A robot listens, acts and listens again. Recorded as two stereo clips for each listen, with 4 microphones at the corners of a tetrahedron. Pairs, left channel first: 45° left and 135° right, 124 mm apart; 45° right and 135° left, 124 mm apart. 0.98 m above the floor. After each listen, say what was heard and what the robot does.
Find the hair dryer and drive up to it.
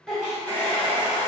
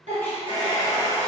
The hair dryer: 30° right. Turn 30° right.
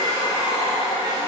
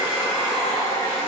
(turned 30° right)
Drive 1.0 m forward.
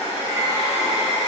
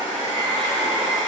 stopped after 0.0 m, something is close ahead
Something is in my way. I am facing the hair dryer but have not reached it.